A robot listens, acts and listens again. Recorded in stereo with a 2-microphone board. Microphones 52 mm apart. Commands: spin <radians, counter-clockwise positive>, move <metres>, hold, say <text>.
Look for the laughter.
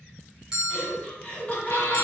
spin 0.52
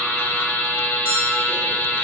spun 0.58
hold
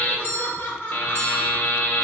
spin 2.36
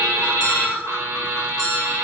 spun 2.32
say Found it: laughter, straight ahead, 1 to 2 m away.